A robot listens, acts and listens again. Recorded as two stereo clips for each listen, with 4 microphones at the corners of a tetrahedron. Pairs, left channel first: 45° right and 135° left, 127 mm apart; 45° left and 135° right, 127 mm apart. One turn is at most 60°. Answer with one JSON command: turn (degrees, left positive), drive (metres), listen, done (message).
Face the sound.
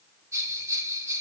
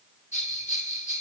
{"turn": 60}
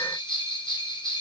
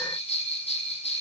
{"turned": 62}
{"done": "Facing the bell, 1 to 2 m away."}